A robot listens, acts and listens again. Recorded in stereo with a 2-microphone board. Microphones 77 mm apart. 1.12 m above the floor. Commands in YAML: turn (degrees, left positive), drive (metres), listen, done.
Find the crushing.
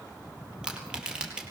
turn: -30
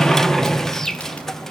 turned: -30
listen: true
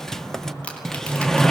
turn: 15
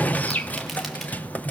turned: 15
listen: true
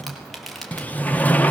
done: "Facing the crushing, over 4 m away."